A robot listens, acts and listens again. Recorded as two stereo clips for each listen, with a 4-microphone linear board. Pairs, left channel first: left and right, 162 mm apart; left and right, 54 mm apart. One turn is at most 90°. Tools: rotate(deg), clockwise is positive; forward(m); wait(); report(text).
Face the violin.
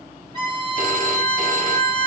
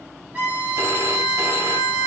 rotate(30)
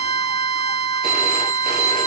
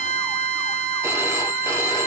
report("Facing the violin.")